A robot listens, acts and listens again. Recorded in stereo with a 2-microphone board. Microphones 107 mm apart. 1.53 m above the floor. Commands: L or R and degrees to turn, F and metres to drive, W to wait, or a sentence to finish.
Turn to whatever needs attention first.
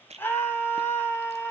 L20
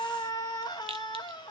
L140
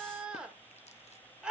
R10
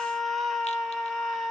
Facing the scream.